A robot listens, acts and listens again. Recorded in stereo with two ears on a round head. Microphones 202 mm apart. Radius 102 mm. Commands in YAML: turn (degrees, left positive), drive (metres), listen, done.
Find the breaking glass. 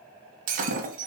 turn: -35
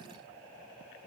listen: true
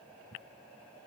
done: "I heard breaking glass, but can't make it out now. It was about straight ahead or 110° right."